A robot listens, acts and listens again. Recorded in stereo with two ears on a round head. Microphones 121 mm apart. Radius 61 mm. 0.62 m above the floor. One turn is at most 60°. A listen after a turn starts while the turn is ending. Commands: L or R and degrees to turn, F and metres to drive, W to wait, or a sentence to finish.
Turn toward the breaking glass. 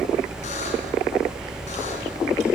W
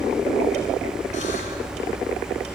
W
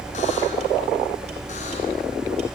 I can't make out breaking glass.